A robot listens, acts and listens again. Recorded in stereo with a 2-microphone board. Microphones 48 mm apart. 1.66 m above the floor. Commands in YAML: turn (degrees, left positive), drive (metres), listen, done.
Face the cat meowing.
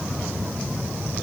listen: true
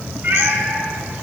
turn: -50
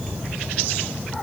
listen: true
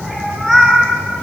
done: "Found it: a cat meowing, straight ahead."